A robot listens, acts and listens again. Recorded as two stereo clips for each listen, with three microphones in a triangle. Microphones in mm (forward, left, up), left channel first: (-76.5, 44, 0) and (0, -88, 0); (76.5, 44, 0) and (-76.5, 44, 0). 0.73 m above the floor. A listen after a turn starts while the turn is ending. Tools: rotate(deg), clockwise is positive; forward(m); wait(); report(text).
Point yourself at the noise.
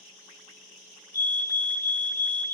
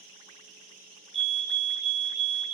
rotate(-135)
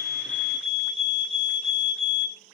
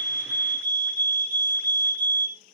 rotate(15)
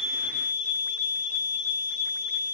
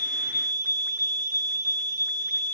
report("Found it: a fire alarm, straight ahead.")